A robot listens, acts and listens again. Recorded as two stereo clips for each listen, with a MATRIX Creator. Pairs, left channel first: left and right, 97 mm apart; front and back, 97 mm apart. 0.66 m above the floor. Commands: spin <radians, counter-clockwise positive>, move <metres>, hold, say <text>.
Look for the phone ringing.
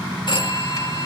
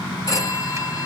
spin 0.87
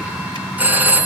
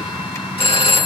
spin -0.35
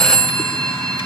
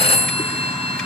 say Found it: a phone ringing, straight ahead.